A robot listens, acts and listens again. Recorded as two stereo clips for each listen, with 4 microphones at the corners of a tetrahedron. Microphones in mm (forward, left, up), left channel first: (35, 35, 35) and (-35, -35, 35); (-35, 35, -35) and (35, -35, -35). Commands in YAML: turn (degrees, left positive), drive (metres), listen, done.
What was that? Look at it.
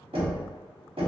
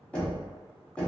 turn: -150
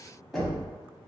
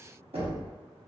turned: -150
turn: -45
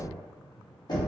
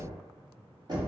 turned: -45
done: "Facing the knocking."